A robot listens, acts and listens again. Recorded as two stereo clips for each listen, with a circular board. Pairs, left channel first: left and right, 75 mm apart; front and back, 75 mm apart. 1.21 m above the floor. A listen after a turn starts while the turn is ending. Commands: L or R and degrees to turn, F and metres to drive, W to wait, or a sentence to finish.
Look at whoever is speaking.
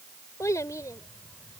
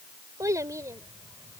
L135
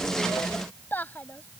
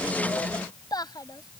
L25
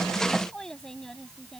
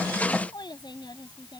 Facing the child speaking.